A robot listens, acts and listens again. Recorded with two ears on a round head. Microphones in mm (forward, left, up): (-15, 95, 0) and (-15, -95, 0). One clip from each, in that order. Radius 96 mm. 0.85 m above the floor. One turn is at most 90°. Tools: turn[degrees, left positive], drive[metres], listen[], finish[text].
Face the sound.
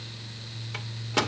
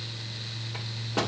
Thought: The microwave: about 65° left or 115° left.
Action: turn[65]
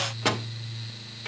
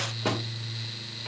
Thought: So it is at 50° left.
Action: turn[50]
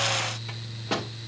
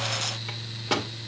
Thought: The microwave is now 25° right.
Action: turn[-25]
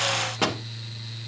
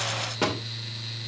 Thought: The microwave is now 20° left.
Action: turn[20]
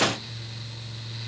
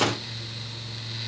Action: listen[]
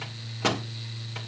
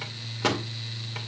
Action: finish[Facing the microwave.]